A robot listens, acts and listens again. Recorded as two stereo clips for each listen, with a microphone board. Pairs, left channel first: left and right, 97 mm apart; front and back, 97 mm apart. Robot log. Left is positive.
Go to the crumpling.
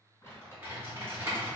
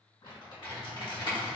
note: The crumpling: 25° left.
cmd yaw +25
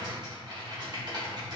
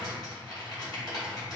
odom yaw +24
cmd idle
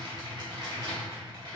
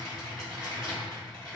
cmd idle
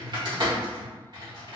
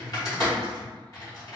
end: I heard crumpling from this way, but can't make it out now. I did not reach it.